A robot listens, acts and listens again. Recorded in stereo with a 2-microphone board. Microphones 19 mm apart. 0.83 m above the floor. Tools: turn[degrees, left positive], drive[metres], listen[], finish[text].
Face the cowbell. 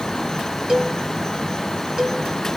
Thought: The cowbell: about 55° right or 125° right.
Action: turn[-55]
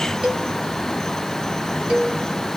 Thought: So it is at 65° right.
Action: turn[-65]
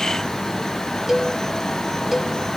Action: finish[Facing the cowbell, 1 to 2 m away.]